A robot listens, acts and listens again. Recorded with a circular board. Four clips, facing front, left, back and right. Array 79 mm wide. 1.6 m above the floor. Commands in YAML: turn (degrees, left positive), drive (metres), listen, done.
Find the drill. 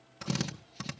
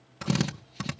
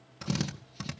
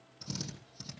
turn: 90
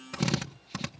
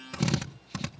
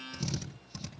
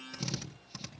turn: 35
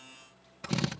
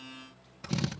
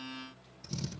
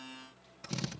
turn: 15
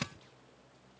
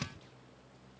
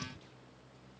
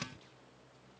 done: "Found it: a drill, straight ahead, 1 to 2 m away."